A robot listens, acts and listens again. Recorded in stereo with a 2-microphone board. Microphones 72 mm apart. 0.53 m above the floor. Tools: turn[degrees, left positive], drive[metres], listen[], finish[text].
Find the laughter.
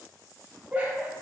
Thought: The laughter: about 20° right or 160° right.
Action: turn[-20]
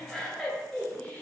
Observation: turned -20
Thought: So it is at 20° left.
Action: turn[20]
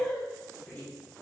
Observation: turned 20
Thought: The laughter is now 35° left.
Action: turn[35]
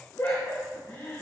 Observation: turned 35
Thought: The laughter is now 55° left.
Action: turn[55]
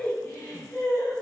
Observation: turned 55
Thought: The laughter is now 30° left.
Action: turn[30]
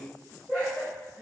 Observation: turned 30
Action: finish[Facing the laughter, 2 to 4 m away.]